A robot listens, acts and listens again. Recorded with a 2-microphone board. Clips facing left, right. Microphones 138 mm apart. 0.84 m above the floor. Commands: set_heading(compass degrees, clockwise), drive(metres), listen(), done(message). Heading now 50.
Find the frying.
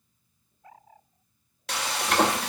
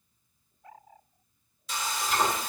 set_heading(335)
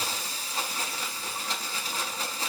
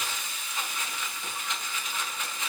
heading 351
set_heading(316)
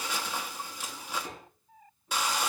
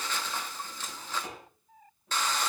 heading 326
set_heading(316)
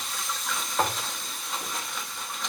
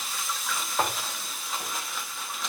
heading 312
done("Facing the frying.")